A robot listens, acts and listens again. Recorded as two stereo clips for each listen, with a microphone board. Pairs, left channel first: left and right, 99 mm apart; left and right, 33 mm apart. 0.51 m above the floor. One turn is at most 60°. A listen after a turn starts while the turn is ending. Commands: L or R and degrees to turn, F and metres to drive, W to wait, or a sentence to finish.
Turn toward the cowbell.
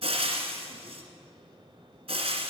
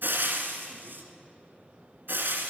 W
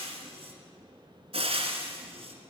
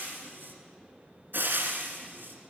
W
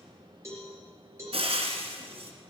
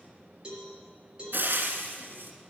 R25
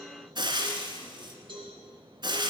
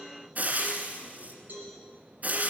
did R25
R60
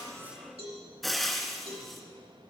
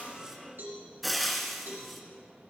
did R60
R60
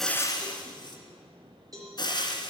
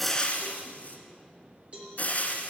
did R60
R35
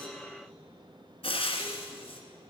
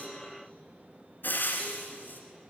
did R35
W
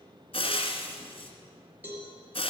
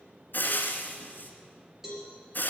R15
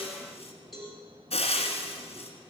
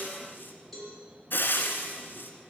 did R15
Facing the cowbell.